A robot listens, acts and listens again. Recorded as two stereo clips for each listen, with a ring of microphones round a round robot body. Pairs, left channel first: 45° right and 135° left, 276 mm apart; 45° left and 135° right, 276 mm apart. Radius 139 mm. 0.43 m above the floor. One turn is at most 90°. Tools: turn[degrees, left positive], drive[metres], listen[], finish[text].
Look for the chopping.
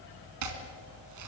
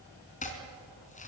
Thought: The chopping: 110° left.
Action: turn[90]
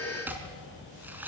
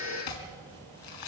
Thought: The chopping is now 50° left.
Action: turn[50]
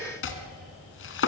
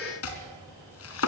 Action: finish[Facing the chopping.]